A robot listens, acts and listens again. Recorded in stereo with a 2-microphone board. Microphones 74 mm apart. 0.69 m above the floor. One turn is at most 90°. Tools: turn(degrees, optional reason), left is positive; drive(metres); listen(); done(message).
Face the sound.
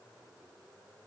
listen()
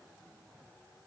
listen()
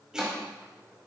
turn(degrees=-30)
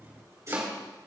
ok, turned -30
turn(degrees=-90, reason="So it is at 135° right.")
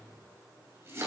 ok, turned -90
turn(degrees=-40, reason="The chopping is now 40° right.")
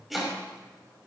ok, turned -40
done("Facing the chopping.")